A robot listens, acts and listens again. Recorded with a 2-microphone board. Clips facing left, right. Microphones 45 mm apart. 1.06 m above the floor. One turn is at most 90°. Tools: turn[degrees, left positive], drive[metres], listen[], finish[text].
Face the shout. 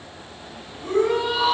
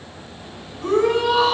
Thought: The shout: about 65° right or 115° right.
Action: turn[-65]
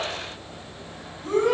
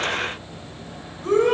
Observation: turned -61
Thought: So it is at 55° right.
Action: turn[-55]
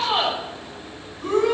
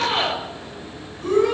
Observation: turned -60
Action: finish[Facing the shout, over 4 m away.]